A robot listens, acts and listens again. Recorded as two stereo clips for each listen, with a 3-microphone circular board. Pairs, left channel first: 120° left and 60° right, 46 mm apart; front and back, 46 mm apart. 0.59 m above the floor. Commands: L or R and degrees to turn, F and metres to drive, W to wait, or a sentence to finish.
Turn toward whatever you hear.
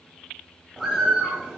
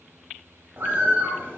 R140
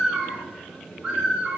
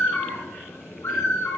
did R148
L10
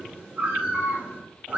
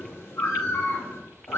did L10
Found it: a bird, straight ahead, 2 to 4 m away.